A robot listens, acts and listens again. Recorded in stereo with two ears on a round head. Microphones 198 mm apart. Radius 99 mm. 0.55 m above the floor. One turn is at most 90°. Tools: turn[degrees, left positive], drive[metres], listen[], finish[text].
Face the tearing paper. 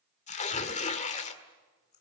Thought: The tearing paper: about 30° left or 150° left.
Action: turn[30]
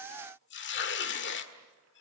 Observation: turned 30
Thought: So it is at 110° left.
Action: turn[90]
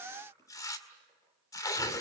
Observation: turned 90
Thought: The tearing paper is now 20° left.
Action: turn[20]
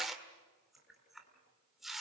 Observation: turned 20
Action: finish[Found it: tearing paper, straight ahead, 1 to 2 m away.]